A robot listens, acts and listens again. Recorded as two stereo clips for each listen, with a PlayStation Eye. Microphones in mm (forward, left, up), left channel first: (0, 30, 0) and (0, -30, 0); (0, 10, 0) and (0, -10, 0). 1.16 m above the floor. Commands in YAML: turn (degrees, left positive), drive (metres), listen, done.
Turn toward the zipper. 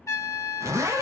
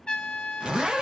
turn: -55
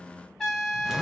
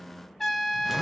listen: true
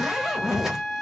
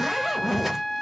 turn: -10
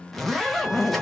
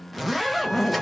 done: "Found it: a zipper, straight ahead, 1 to 2 m away."